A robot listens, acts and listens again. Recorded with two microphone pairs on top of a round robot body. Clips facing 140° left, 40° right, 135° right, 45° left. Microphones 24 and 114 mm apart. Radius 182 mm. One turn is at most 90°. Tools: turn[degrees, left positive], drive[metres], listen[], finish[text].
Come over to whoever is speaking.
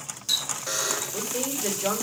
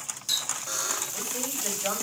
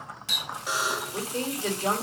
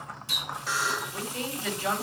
Thought: The woman speaking: 175° right.
Action: turn[-90]
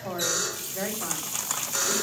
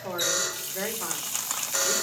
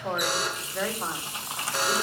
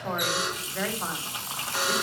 Thought: The woman speaking is now 50° right.
Action: turn[-50]
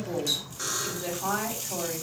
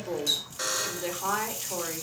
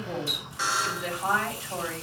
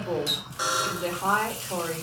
Action: drive[1.0]
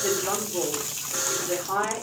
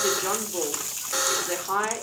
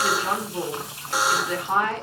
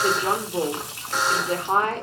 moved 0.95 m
Thought: The woman speaking is now 10° left.
Action: turn[10]
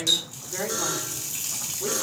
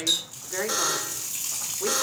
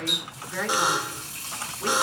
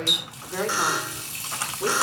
Action: drive[1.0]
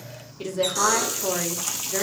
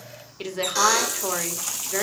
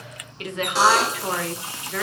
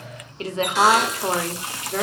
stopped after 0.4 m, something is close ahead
Action: finish[I am next to the woman speaking.]